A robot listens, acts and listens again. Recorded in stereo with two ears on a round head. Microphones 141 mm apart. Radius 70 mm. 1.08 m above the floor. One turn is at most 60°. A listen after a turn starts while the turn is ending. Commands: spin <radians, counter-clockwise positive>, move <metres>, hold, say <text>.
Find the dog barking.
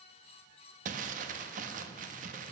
hold
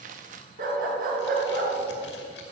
spin -1.05
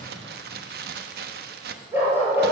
spin -0.26
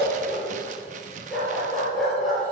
say Found it: a dog barking, straight ahead.